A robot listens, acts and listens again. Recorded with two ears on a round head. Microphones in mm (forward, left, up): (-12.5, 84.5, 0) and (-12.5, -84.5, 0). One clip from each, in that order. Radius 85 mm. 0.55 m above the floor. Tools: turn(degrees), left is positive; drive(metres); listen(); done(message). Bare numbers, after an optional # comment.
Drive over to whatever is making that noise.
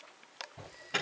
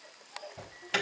# The alarm: about 50° right or 130° right.
turn(-50)
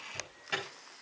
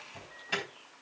drive(1.0)
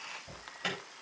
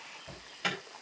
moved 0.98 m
drive(1.0)
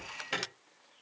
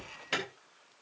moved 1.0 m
drive(1.0)
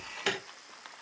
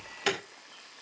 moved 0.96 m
drive(1.0)
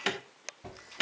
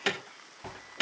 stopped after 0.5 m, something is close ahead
done("Arrived at the alarm, straight ahead.")